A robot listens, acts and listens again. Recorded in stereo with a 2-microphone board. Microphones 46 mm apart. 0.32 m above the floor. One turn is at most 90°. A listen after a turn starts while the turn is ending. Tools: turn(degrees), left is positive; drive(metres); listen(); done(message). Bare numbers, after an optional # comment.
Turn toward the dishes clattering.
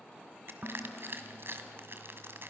# The dishes clattering: about 40° right or 140° right.
turn(-40)
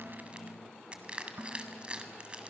# So it is at 95° right.
turn(-90)
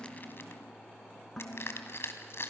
# The dishes clattering is now 10° left.
turn(10)
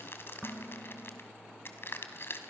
done("Facing the dishes clattering, 2 to 4 m away.")